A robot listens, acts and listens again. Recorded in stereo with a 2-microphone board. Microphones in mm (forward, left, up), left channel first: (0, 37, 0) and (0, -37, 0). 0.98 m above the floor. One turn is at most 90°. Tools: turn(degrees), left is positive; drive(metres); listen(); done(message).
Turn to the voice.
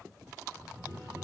turn(degrees=-20)
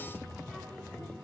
turn(degrees=-30)
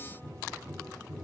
listen()
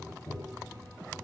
turn(degrees=10)
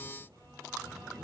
listen()
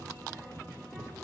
turn(degrees=-10)
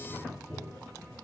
done("Found it: a child speaking, straight ahead.")